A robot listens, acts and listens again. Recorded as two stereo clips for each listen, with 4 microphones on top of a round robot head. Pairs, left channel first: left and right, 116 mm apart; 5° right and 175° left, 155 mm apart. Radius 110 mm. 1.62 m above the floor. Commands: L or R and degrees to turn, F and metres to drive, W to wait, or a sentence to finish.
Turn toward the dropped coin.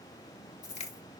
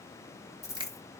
L65
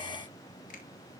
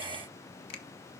I heard a dropped coin from this way, but can't make it out now.